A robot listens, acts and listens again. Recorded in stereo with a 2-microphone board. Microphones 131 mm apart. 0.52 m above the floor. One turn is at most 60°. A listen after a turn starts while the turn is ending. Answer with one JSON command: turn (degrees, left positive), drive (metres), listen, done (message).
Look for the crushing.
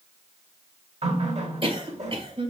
{"listen": true}
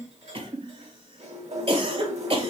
{"listen": true}
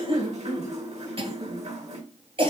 {"done": "I can't make out crushing to turn to."}